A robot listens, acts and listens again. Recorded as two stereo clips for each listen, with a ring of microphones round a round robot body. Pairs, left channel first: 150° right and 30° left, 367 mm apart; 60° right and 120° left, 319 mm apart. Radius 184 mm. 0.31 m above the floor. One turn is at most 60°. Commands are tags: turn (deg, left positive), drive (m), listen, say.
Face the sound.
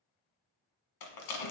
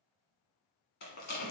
<turn deg="-60"/>
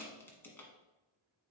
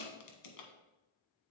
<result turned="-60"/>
<turn deg="-60"/>
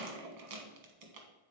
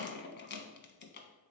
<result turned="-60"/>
<say>Found it: a rattle, straight ahead, 1 to 2 m away.</say>